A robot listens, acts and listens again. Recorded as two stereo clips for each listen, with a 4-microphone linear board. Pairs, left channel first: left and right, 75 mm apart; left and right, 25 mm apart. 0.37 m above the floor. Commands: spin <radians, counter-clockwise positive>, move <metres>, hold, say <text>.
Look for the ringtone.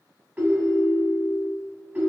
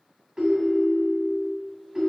spin -0.35
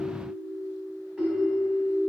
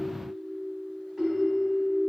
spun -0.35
say Facing the ringtone, 1 to 2 m away.